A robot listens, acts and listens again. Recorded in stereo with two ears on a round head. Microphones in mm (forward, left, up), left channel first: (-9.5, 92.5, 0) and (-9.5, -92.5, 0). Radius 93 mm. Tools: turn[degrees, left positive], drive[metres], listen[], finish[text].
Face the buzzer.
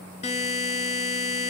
Thought: The buzzer: about 35° left or 145° left.
Action: turn[35]
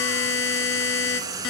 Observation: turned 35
Thought: So it is at 110° left.
Action: turn[110]
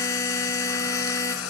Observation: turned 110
Thought: The buzzer is now 15° left.
Action: turn[15]
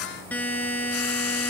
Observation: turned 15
Thought: The buzzer is now 10° left.
Action: turn[10]
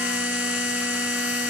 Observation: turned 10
Action: finish[Found it: a buzzer, straight ahead, 1 to 2 m away.]